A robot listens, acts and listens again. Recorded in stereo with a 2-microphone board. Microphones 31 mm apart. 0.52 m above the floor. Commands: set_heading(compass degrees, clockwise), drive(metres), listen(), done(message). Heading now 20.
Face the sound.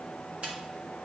listen()
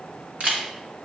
set_heading(70)
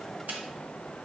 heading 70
listen()
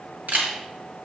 set_heading(150)
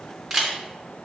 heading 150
set_heading(160)
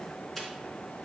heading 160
listen()
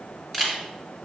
done("Facing the camera shutter, 1 to 2 m away.")